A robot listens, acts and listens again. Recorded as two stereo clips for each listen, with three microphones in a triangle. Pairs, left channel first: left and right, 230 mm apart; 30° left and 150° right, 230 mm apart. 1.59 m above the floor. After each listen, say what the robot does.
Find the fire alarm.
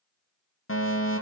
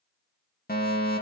Turn 75° left.
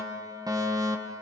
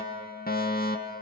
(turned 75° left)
Turn 15° right.
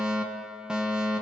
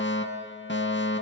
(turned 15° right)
Found it: a fire alarm, straight ahead.